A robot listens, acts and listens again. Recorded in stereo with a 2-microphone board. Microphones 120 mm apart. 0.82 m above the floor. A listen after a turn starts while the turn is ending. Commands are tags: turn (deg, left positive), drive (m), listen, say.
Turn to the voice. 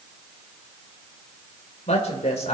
<turn deg="70"/>
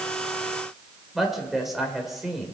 <say>Facing the woman speaking, 2 to 4 m away.</say>